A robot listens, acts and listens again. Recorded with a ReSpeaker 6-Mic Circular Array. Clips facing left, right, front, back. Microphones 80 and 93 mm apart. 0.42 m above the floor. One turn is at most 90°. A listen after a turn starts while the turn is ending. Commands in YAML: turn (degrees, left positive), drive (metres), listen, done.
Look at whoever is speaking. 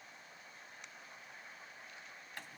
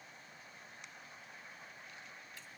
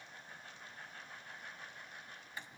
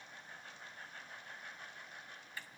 listen: true
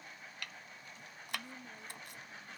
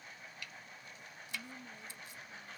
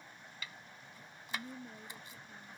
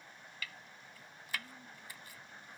turn: 15
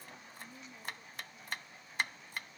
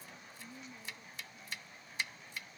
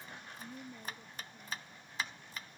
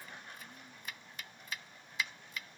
done: "Found it: a woman speaking, straight ahead."